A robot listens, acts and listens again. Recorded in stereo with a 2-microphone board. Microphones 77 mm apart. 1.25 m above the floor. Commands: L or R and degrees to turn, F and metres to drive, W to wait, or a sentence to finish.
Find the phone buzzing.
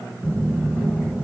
R25
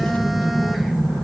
Facing the phone buzzing.